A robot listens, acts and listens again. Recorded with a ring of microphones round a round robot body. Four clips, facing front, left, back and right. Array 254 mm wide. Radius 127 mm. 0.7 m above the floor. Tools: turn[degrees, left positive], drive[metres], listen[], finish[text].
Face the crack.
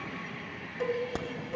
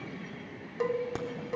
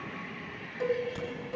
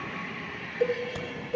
Thought: The crack: 35° left.
Action: turn[35]
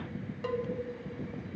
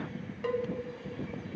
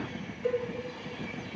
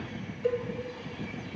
Action: finish[I heard a crack from this way, but can't make it out now.]